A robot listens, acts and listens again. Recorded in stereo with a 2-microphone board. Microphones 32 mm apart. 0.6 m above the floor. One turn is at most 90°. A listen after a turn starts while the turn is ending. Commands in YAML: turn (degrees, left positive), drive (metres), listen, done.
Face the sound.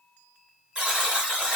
turn: -30
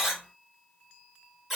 done: "Found it: a buzzer, straight ahead, 1 to 2 m away."